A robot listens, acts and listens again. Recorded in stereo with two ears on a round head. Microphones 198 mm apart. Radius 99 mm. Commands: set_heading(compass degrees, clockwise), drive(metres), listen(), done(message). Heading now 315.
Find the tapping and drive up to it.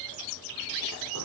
listen()
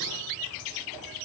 listen()
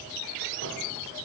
done("I can't make out tapping.")